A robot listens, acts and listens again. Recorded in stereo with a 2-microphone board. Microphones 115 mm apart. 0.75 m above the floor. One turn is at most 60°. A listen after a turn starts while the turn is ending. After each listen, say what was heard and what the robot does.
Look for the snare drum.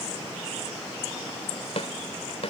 The snare drum: about 60° left or 120° left. Turn 60° left.
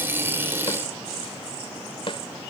So it is at 50° left. Turn 50° left.
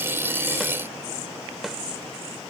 Keep listening.
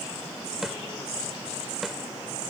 Facing the snare drum.